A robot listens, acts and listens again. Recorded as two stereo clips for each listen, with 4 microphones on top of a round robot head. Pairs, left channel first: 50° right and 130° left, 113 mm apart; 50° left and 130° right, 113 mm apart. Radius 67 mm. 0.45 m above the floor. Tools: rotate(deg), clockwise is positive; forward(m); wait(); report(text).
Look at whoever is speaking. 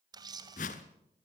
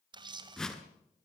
wait()
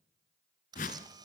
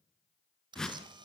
wait()
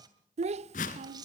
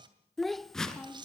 rotate(-140)
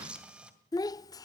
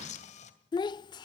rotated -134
report("Facing the child speaking, under 1 m away.")